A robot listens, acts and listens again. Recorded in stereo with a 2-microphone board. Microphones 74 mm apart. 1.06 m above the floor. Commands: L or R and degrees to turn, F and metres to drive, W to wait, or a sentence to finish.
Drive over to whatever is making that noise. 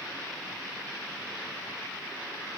W
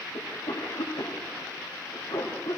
L70
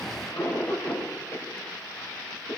L40
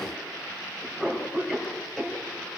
F1.0
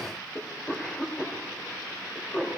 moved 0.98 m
L10
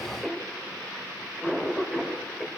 F1.0
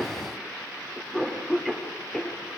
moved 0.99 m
F1.0
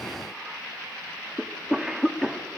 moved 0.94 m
F1.0
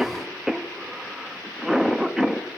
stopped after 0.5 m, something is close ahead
I am next to the cough.